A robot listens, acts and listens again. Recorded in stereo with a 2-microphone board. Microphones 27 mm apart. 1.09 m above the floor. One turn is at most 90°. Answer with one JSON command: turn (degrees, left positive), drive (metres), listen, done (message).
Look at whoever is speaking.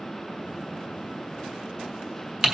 {"listen": true}
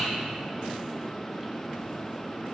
{"listen": true}
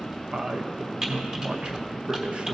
{"turn": -45}
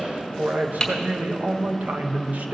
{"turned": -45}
{"turn": -85}
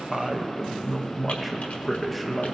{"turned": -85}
{"done": "Facing the man speaking."}